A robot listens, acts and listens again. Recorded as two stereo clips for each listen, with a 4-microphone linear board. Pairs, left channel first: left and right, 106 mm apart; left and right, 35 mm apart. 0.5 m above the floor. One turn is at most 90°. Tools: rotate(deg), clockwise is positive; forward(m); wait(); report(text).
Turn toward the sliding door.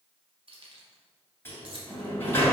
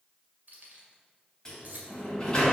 rotate(-20)
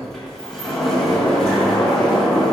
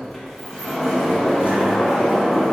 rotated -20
report("Facing the sliding door, 2 to 4 m away.")